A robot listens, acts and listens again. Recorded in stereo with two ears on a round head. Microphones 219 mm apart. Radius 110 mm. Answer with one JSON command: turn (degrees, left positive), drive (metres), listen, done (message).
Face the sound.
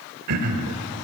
{"turn": -70}
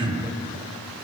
{"turn": -20}
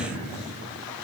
{"done": "Found it: throat clearing, straight ahead."}